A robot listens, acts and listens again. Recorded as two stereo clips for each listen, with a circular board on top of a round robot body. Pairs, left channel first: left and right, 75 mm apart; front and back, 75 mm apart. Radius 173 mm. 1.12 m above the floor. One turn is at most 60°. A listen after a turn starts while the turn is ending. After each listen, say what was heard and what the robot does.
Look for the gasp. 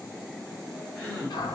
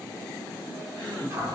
The gasp: 170° left. Turn 60° left.
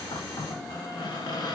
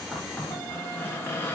Nothing new. It was at 110° left. Turn 60° left.
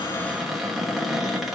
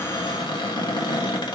Nothing new. It was at 50° left. Turn 50° left.
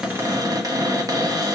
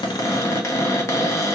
I heard a gasp from this way, but can't make it out now.